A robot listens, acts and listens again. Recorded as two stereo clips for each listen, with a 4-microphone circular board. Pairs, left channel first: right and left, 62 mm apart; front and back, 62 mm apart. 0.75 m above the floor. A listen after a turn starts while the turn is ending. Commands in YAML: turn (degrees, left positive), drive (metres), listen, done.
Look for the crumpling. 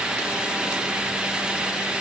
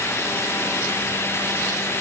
listen: true
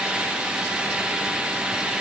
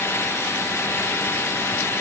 listen: true
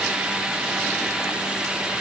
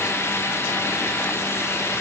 done: "I can't make out crumpling to turn to."